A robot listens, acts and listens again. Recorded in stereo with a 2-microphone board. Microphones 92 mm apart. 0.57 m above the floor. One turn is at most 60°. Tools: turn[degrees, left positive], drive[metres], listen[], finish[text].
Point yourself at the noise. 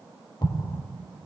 Thought: The explosion: about 60° left or 120° left.
Action: turn[60]
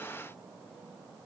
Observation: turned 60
Action: listen[]
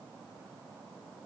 Action: finish[I heard an explosion, but can't make it out now. It was about straight ahead or 60° left.]